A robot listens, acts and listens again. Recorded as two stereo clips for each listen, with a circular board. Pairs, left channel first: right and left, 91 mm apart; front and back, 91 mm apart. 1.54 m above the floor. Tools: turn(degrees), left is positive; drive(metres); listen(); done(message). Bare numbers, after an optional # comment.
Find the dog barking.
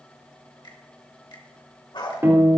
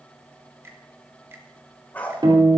# The dog barking: 70° right.
turn(-70)
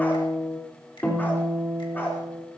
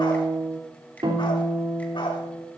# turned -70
listen()
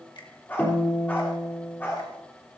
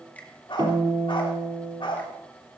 # The dog barking is now 25° right.
turn(-25)
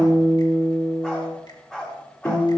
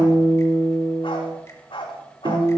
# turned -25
# The dog barking is now 10° right.
turn(-10)
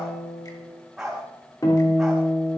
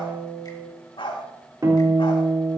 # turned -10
done("Facing the dog barking.")